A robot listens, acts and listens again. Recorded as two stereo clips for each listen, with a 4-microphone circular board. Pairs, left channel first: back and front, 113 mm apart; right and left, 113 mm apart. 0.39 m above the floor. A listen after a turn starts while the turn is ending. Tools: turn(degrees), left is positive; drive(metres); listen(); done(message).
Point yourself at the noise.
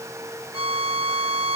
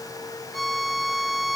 done("Facing the violin, 1 to 2 m away.")